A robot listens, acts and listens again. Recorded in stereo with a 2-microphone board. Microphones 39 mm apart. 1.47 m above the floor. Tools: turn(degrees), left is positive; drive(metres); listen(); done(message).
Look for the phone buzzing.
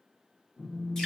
turn(degrees=55)
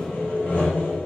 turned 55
listen()
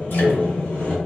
listen()
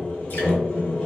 done("I heard a phone buzzing, but can't make it out now. It was about straight ahead or 70° left.")